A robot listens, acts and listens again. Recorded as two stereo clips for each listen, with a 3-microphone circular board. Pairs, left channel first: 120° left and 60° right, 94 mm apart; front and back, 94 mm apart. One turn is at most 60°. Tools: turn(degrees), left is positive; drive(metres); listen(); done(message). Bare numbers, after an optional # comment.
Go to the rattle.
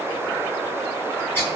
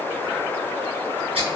listen()
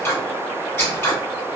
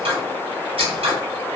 listen()
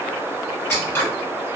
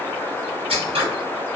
done("I can't make out a rattle to turn to.")